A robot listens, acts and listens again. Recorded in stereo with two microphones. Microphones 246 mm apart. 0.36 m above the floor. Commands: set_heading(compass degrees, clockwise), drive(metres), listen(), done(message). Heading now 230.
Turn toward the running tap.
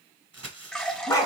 set_heading(200)
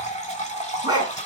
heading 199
set_heading(54)
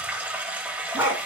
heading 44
set_heading(54)
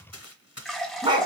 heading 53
done("Found it: a running tap, straight ahead.")